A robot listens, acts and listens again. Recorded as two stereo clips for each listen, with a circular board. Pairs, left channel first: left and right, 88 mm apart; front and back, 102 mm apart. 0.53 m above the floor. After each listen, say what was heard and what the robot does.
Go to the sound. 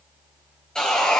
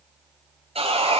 The sawing: 170° left. Turn 170° left.
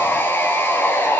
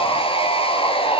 The sawing is now 20° left. Turn 20° left.
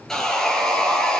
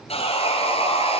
Drive 1.0 m forward.
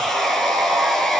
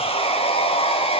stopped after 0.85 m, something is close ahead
Blocked. The sawing is further on, straight ahead.